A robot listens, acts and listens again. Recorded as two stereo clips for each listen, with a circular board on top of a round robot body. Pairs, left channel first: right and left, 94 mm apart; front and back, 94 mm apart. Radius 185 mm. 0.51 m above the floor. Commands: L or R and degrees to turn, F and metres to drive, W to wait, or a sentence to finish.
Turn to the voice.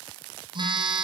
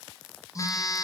W
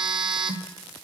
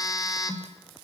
W
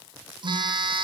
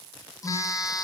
I can't make out anyone speaking to turn to.